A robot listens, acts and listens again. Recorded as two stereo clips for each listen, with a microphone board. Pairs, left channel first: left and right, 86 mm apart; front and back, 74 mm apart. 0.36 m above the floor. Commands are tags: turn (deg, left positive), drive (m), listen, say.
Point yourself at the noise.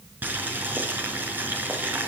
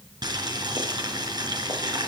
<turn deg="-160"/>
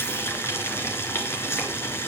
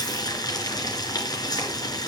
<turn deg="30"/>
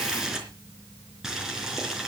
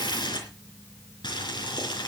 <say>Facing the boiling.</say>